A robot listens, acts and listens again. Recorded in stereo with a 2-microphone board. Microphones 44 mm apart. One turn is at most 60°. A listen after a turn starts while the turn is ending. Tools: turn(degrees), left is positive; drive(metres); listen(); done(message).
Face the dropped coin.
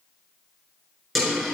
turn(degrees=30)
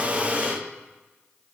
listen()
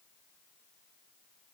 done("I heard a dropped coin, but can't make it out now. It was about 30° right or 150° left.")